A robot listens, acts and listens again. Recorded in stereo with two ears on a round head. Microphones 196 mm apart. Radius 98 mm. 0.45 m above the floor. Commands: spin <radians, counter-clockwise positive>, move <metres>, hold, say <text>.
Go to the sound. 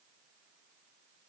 hold
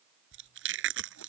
spin -0.96
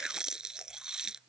move 1.0
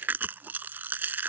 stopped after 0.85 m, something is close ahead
spin -0.17
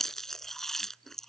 say Blocked. The chewing is further on, straight ahead.